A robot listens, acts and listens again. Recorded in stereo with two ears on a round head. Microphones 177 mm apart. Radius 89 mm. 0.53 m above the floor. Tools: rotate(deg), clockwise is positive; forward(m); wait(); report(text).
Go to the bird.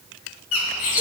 rotate(-90)
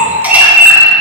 rotate(10)
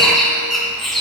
forward(1.0)
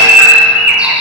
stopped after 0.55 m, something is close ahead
report("Blocked. The bird is further on, straight ahead.")